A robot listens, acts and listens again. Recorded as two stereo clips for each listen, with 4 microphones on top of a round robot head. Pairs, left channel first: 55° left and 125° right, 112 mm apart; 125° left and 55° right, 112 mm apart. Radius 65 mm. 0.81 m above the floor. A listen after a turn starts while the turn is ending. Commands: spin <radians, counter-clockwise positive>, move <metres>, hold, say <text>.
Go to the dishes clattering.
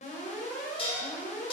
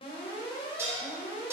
spin 0.26
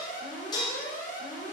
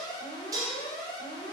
move 1.0
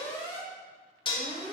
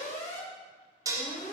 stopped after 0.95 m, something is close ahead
say I am next to the dishes clattering.